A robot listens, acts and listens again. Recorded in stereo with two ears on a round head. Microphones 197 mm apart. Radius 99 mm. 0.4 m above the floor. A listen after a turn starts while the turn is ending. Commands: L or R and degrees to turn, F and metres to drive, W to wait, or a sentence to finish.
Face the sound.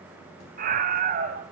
R40
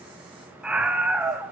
Facing the scream.